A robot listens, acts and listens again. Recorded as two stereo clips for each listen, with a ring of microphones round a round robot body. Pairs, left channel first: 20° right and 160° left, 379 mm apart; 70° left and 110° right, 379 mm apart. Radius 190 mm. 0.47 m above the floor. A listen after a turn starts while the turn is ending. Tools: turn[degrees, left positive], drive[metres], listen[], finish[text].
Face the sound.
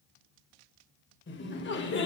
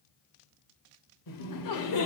Thought: The laughter: 35° left.
Action: turn[35]
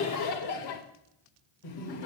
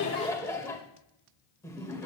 Thought: The laughter is now 15° right.
Action: turn[-15]
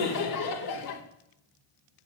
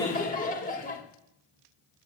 Action: finish[Facing the laughter.]